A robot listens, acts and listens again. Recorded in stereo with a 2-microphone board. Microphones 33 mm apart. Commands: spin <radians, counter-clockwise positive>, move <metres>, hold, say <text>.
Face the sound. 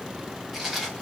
spin 0.52
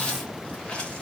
spin 2.62
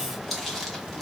say Facing the chewing.